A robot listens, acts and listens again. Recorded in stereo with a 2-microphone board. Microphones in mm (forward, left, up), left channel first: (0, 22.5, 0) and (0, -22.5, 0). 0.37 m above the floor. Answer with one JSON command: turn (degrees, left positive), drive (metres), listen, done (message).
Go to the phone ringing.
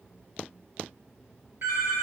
{"turn": -75}
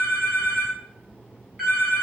{"turn": -15}
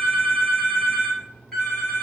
{"drive": 1.0}
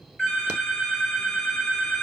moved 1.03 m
{"drive": 1.0}
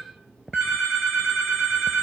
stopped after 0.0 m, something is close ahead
{"done": "I am next to the phone ringing."}